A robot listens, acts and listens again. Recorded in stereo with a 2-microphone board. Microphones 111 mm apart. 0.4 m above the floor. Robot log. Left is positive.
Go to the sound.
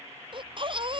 note: The baby crying: about 50° right or 130° right.
cmd yaw -50
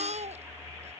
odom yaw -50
note: So it is at 80° right.
cmd yaw -80
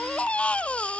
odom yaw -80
note: The baby crying is now 10° left.
cmd yaw +10
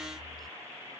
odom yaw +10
cmd fwd 1.0
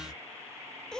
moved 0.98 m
cmd fwd 1.0
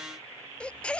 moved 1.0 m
note: The baby crying is now 10° left.
cmd yaw +10
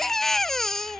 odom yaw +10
cmd fwd 1.0
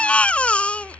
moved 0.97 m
note: The baby crying is now 10° left.
cmd yaw +10
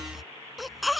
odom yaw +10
cmd fwd 1.0
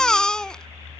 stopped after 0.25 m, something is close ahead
end: I am next to the baby crying.